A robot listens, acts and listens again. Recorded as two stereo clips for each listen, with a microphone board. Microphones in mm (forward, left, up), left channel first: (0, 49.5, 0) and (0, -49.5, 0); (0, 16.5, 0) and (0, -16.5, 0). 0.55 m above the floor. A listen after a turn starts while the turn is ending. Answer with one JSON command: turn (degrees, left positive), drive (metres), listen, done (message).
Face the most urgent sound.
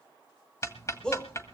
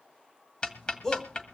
{"turn": 30}
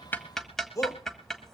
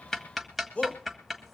{"turn": 140}
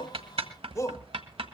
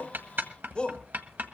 {"turn": 35}
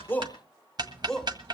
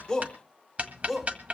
{"done": "Found it: a shout, straight ahead, 1 to 2 m away."}